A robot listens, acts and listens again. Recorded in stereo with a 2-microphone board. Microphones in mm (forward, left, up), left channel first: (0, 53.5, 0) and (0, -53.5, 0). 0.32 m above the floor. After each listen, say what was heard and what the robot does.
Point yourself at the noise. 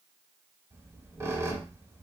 The squeak: about 25° right or 155° right. Turn 25° right.
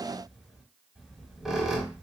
Found it: a squeak, straight ahead, under 1 m away.